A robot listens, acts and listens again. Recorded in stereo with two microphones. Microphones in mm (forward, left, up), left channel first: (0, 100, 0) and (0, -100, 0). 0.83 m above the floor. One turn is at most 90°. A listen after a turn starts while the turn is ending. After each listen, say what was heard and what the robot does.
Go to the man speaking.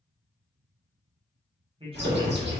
The man speaking: about 30° right or 150° right. Turn 30° right.
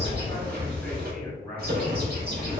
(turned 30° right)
Drive 1.0 m forward.
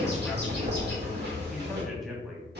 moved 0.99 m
Drive 1.0 m forward.
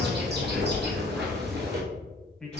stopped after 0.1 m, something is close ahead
Arrived at the man speaking, straight ahead.